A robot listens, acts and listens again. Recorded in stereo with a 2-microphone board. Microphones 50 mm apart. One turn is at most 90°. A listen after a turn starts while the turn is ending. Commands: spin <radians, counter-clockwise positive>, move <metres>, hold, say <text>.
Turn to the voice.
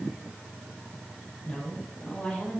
spin 0.44
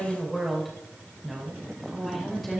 say Facing the woman speaking, 2 to 4 m away.